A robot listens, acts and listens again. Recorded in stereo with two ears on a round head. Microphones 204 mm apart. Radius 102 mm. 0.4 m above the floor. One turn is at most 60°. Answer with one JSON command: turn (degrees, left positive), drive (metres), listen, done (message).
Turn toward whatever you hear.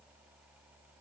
{"listen": true}
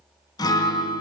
{"turn": 20}
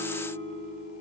{"turn": 60}
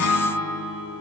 {"turn": 60}
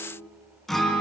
{"done": "Found it: a guitar, straight ahead, 1 to 2 m away."}